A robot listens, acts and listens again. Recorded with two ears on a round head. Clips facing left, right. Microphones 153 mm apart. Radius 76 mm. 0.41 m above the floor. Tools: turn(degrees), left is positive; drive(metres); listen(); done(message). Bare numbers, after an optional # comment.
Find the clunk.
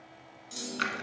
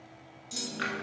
turn(-30)
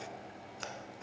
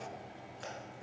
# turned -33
listen()
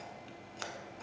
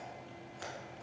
done("I heard a clunk, but can't make it out now. It was about 25° left or 140° right.")